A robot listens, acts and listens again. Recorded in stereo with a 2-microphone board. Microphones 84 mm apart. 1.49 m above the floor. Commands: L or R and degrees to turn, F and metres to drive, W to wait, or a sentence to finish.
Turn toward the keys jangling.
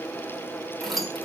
L30
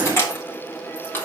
L155
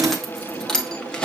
L10
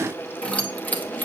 L20
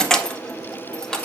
L10
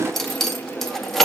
Facing the keys jangling.